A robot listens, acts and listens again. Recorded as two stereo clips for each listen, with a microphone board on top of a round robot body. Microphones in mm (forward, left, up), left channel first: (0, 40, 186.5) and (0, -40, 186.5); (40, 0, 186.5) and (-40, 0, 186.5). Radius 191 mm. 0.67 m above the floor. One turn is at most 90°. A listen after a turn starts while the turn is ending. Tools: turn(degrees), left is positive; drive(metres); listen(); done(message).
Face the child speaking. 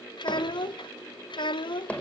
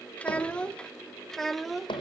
turn(degrees=90)
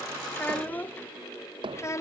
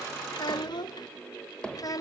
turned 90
turn(degrees=40)
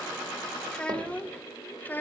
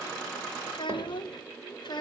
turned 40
turn(degrees=25)
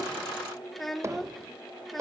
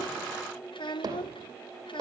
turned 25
done("Found it: a child speaking, straight ahead.")